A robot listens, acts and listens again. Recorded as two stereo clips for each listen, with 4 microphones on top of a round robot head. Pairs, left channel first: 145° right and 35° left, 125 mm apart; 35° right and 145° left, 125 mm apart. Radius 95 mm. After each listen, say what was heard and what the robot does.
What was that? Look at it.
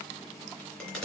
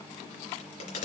The crack: 65° right. Turn 65° right.
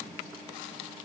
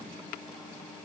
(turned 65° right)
I heard a crack from this way, but can't make it out now.